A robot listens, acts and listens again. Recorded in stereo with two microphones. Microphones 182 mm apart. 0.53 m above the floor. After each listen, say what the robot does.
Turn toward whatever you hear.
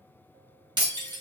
Turn 25° right.
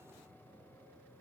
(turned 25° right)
Keep listening.
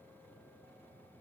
I heard breaking glass, but can't make it out now. It was about straight ahead or 130° right.